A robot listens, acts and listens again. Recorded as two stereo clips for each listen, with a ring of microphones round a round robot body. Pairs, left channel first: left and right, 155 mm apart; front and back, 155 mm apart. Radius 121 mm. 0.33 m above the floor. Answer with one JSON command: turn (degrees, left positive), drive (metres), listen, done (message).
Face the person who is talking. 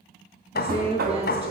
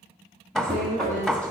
{"turn": -40}
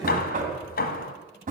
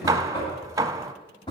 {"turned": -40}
{"listen": true}
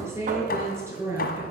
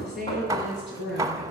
{"turn": -15}
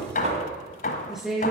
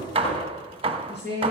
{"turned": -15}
{"done": "Found it: a woman speaking, straight ahead, over 4 m away."}